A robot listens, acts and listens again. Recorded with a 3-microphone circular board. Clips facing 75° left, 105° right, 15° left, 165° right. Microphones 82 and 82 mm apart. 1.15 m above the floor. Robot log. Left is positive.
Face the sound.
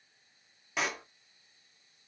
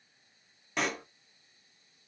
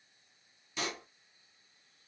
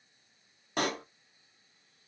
note: The pop: 160° left.
cmd yaw +160
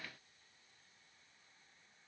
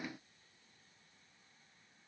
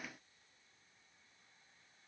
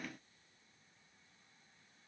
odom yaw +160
end: Facing where the pop came from. I can't hear it now.